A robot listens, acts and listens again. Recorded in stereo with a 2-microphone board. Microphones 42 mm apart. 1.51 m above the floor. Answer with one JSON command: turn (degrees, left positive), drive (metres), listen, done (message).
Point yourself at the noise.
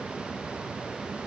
{"listen": true}
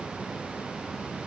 {"listen": true}
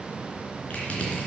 {"turn": 35}
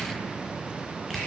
{"done": "Found it: crushing, straight ahead, 2 to 4 m away."}